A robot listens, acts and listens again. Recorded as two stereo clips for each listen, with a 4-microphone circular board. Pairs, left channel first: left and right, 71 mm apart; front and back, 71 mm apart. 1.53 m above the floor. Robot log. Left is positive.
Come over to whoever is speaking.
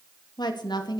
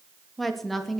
note: The woman speaking: 90° left.
cmd yaw +90
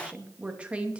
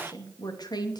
note: The woman speaking is now 15° right.
cmd yaw -15
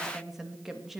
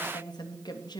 cmd fwd 1.0
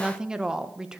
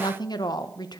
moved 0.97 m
note: The woman speaking is now 10° right.
cmd yaw -10
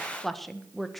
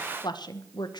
cmd fwd 1.0
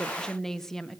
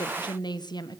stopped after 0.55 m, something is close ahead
end: I am next to the woman speaking.